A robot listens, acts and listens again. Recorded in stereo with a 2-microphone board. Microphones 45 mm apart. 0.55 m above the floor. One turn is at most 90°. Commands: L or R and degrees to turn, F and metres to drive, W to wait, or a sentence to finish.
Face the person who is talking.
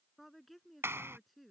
L30
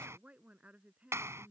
R30
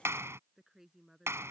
R10
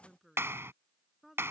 Found it: a woman speaking, straight ahead.